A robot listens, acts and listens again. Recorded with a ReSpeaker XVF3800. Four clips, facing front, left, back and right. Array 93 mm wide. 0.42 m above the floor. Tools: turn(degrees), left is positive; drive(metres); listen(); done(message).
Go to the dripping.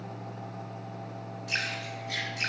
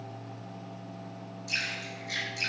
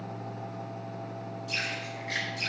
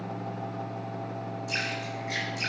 turn(degrees=-35)
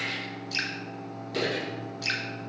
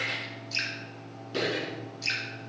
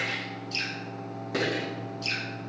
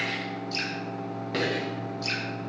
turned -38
drive(metres=1.0)
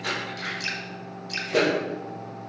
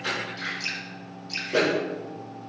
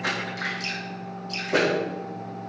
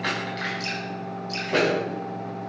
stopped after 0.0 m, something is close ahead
done("Blocked. The dripping is further on, straight ahead.")